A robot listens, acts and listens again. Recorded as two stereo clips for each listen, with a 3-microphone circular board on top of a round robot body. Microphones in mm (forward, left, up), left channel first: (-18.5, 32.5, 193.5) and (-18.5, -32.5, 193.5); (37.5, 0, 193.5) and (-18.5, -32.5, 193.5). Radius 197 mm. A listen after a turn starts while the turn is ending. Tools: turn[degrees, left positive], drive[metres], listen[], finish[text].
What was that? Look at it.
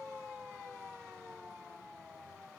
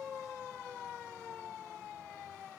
Action: listen[]
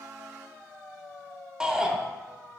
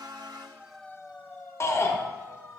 Thought: The shout: 10° right.
Action: turn[-10]
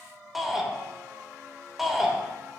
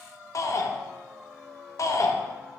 Action: finish[Facing the shout, 1 to 2 m away.]